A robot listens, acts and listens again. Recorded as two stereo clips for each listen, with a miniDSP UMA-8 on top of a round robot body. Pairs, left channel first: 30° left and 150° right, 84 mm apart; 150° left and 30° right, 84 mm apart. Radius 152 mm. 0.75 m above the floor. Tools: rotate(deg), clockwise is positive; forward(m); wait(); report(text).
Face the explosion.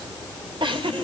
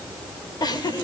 wait()
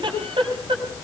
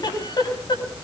wait()
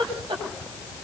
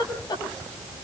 report("I can't make out an explosion, only a giggle.")